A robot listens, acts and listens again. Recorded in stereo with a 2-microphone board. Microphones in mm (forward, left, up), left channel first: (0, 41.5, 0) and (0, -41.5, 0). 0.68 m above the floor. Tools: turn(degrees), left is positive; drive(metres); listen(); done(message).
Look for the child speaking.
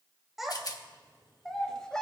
turn(degrees=30)
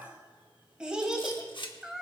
done("Found it: a child speaking, straight ahead.")